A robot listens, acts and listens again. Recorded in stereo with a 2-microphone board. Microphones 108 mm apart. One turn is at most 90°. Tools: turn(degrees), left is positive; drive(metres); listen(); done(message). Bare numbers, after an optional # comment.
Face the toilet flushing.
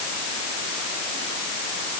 listen()
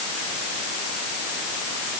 listen()
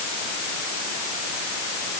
done("I can't make out a toilet flushing.")